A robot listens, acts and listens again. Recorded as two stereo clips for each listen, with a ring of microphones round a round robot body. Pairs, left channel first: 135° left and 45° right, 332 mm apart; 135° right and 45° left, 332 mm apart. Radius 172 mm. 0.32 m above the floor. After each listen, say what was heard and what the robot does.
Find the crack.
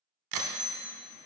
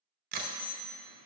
The crack: 20° right. Turn 20° right.
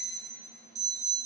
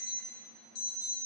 I heard a crack from this way, but can't make it out now.